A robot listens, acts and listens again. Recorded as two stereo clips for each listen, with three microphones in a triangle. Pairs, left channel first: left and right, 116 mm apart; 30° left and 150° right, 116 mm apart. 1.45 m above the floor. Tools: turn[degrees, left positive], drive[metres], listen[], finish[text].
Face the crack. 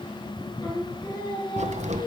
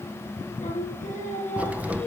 Thought: The crack: 70° right.
Action: turn[-70]
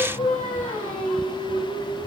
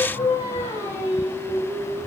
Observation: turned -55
Thought: Nothing new. It was at 15° right.
Action: turn[-15]
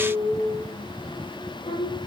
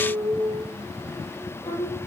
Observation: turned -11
Action: finish[Facing where the crack came from. I can't hear it now.]